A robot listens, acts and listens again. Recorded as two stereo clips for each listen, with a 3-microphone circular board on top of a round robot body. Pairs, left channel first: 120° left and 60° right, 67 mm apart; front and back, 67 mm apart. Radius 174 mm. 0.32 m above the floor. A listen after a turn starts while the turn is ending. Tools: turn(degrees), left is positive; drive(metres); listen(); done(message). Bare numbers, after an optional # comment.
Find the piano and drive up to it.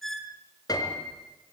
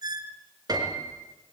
# The piano: 155° left.
turn(155)
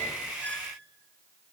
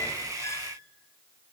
listen()
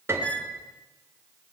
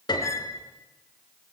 drive(1.0)
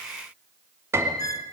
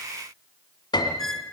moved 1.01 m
drive(1.0)
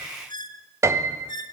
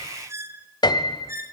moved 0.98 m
# The piano is now 10° right.
turn(-10)
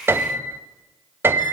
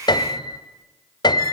drive(1.0)
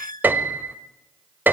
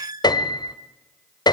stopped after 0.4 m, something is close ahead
done("Arrived at the piano, straight ahead.")